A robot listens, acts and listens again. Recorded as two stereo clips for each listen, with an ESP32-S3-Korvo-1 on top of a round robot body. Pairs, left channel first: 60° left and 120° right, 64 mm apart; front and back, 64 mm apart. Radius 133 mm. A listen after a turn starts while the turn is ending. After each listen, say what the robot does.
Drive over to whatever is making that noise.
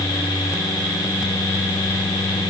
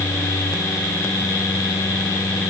Keep listening.
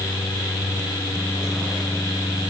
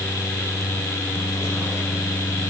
Keep listening.
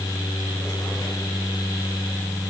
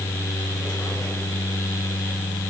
I can't make out anything.